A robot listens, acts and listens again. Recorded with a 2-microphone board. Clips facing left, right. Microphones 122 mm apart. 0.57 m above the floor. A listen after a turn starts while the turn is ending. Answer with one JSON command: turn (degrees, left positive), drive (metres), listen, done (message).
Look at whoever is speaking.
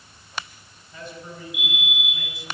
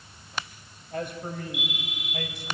{"turn": -60}
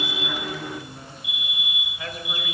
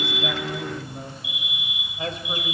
{"turn": -25}
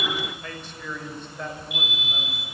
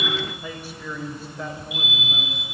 {"done": "Found it: a man speaking, straight ahead, 2 to 4 m away."}